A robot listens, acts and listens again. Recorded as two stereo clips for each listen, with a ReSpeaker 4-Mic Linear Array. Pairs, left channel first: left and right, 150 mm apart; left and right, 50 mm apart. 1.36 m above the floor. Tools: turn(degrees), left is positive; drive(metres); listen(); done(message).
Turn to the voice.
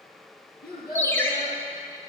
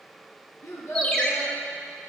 turn(degrees=70)
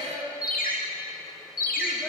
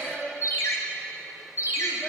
turn(degrees=35)
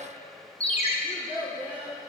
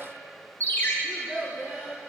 turn(degrees=-10)
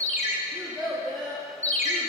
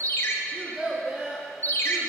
done("Found it: a child speaking, straight ahead, 1 to 2 m away.")